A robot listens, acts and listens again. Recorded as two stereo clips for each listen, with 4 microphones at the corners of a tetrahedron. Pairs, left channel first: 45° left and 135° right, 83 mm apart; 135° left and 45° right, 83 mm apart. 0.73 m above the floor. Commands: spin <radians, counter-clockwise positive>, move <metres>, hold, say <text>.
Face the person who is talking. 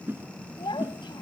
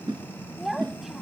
spin 0.70
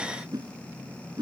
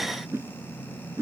hold
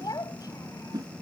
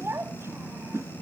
spin 0.17
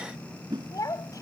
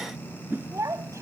say Facing the child speaking.